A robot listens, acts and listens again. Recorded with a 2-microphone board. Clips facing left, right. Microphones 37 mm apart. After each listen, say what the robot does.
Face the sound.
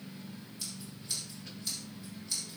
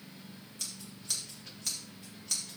Turn 90° right.
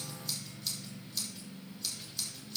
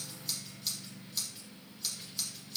Found it: scissors, straight ahead, 2 to 4 m away.